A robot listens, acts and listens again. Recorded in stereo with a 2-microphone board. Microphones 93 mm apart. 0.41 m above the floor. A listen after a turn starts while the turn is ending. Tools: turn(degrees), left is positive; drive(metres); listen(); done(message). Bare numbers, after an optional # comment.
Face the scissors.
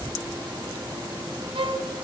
listen()
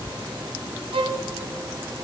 listen()
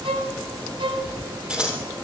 turn(-30)
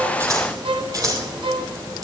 # So it is at 140° right.
turn(-140)
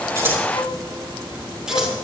listen()
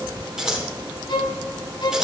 done("Facing the scissors.")